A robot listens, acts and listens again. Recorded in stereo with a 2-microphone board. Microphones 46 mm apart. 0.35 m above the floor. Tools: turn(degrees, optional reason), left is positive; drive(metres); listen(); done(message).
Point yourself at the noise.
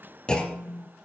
turn(degrees=15, reason="The clunk: about 15° left or 165° left.")
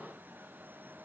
listen()
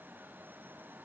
done("I heard a clunk, but can't make it out now. It was about straight ahead or 150° left.")